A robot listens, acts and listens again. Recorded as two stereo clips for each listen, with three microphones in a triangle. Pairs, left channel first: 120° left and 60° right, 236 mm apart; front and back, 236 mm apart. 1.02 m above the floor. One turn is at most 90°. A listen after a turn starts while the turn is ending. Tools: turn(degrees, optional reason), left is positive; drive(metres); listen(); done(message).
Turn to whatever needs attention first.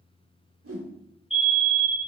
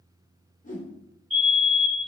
turn(degrees=90, reason="The fire alarm: straight behind.")
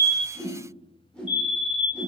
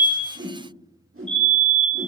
turn(degrees=85, reason="The fire alarm is now 85° left.")
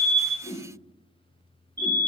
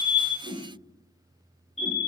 turn(degrees=10, reason="The fire alarm is now 10° left.")
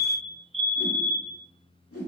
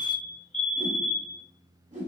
done("Found it: a fire alarm, straight ahead, 2 to 4 m away.")